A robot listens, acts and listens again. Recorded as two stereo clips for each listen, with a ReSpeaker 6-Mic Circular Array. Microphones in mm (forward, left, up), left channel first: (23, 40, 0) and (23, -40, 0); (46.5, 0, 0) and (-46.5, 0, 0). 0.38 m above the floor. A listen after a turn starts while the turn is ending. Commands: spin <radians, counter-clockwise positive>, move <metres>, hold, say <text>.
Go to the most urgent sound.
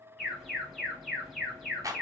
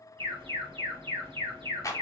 spin 3.14
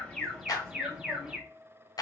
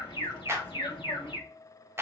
spin -0.17
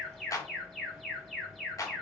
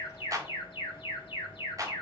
move 1.0
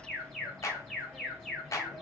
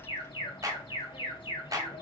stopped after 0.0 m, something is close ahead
say Blocked. The alarm is further on, straight ahead.